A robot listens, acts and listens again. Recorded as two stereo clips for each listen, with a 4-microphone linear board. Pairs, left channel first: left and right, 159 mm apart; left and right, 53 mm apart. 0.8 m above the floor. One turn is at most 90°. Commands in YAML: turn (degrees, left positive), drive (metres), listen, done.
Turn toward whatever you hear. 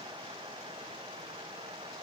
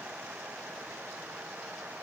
listen: true
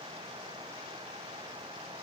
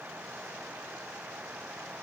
listen: true
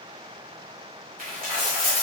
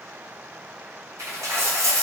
turn: -65
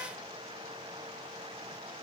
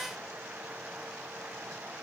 listen: true
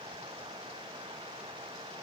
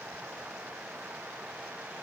done: "I heard a dropped coin, but can't make it out now. It was about straight ahead or 50° right."